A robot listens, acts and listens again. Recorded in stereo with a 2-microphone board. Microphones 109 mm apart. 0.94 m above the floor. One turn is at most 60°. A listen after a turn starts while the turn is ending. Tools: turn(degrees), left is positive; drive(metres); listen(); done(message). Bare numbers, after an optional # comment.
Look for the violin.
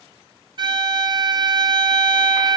# The violin: about 45° right or 135° right.
turn(-45)
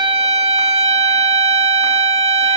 # So it is at 85° right.
turn(-60)
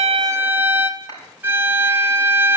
# The violin is now 20° right.
turn(-20)
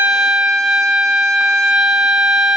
done("Facing the violin.")